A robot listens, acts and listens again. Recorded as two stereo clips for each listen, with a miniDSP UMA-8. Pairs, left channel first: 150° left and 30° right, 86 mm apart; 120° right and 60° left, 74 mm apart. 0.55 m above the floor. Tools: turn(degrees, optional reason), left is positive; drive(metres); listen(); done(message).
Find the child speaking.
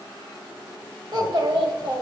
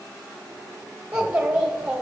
turn(degrees=-20, reason="The child speaking: 20° right.")
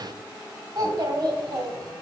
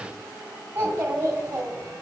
done("Found it: a child speaking, straight ahead.")